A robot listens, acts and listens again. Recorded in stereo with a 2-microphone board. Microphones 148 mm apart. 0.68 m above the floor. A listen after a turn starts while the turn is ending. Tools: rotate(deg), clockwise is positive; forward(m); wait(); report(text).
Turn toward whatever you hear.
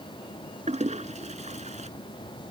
rotate(55)
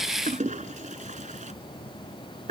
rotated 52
rotate(65)
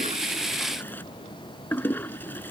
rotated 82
rotate(-15)
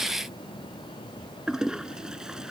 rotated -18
report("Facing the toilet flushing.")